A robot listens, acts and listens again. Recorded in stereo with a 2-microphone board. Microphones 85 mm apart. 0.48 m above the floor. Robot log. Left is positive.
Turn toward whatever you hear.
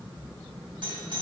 note: The doorbell: about 60° right or 120° right.
cmd yaw -60
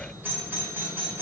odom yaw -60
note: So it is at 25° right.
cmd yaw -25
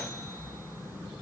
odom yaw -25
cmd idle
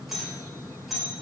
end: Facing the doorbell, 2 to 4 m away.